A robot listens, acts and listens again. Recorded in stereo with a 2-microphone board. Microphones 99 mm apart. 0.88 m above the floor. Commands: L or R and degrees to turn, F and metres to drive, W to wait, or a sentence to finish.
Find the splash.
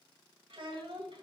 W
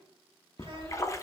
L30
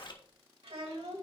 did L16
L130
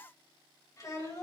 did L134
I heard a splash from this way, but can't make it out now.